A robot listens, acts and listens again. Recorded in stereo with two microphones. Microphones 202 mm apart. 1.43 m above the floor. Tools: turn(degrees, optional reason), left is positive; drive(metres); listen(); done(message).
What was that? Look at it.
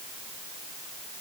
listen()
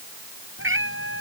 turn(degrees=-90)
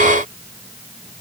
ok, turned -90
listen()
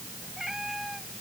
done("Found it: a cat meowing, straight ahead.")